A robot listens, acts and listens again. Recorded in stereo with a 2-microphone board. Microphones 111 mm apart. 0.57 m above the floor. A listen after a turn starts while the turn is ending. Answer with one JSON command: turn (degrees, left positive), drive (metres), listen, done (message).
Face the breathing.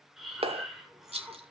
{"turn": -30}
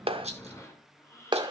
{"turn": 25}
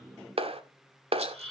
{"done": "Found it: breathing, straight ahead."}